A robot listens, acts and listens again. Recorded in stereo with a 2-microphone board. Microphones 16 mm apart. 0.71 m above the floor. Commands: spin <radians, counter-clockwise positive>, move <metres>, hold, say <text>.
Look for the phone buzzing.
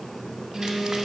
spin -0.52
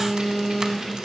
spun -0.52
spin 0.26
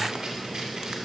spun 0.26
hold
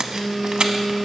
say Facing the phone buzzing, over 4 m away.